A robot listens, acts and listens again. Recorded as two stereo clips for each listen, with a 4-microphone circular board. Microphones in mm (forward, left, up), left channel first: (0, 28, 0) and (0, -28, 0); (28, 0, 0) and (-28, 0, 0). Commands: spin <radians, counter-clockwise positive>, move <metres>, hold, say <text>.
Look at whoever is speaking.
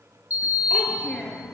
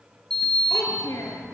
spin 0.44
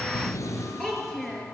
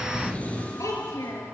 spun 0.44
spin 0.17
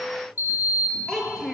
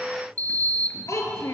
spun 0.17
spin 0.17
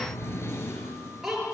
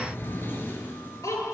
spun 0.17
say Facing the child speaking.